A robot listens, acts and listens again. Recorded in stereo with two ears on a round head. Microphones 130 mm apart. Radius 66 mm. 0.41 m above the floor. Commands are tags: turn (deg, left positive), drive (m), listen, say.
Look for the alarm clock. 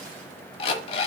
<turn deg="35"/>
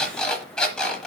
<say>Facing the alarm clock.</say>